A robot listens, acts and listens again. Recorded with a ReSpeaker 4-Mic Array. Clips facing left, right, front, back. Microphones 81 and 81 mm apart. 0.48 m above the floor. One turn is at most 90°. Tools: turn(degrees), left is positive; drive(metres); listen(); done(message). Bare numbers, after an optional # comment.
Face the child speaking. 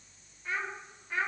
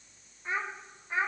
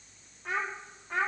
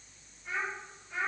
# The child speaking: 20° right.
turn(-20)
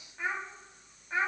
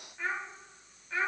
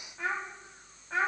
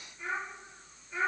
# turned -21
# The child speaking is now 20° left.
turn(20)
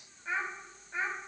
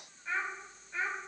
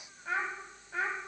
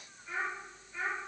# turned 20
# The child speaking is now 25° left.
turn(25)
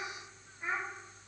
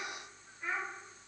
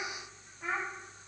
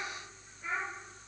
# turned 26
# The child speaking is now 20° left.
turn(20)
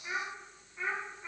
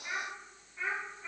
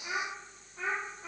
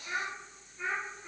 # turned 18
# The child speaking is now 15° left.
turn(15)
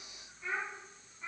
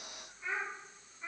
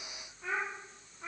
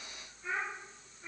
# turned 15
done("Facing the child speaking.")